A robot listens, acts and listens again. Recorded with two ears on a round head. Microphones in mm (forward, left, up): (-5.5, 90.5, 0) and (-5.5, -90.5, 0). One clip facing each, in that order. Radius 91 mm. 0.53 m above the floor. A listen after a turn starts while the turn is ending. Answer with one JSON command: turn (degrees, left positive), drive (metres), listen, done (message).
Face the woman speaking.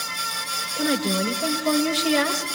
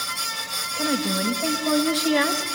{"turn": 40}
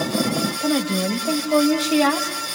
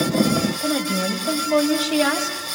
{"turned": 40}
{"done": "Facing the woman speaking."}